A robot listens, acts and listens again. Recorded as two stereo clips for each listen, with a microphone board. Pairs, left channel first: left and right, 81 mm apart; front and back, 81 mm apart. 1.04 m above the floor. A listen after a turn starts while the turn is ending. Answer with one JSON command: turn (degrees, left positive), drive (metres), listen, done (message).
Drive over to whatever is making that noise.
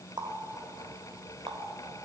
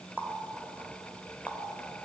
{"turn": -110}
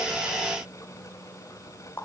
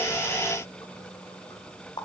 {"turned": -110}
{"turn": 25}
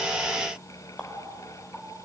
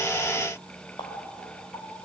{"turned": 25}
{"drive": 1.0}
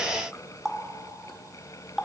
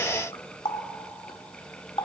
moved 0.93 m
{"drive": 1.0}
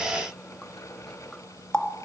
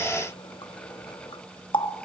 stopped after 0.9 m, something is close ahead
{"turn": 10}
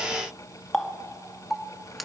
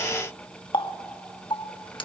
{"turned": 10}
{"done": "I am next to the running tap."}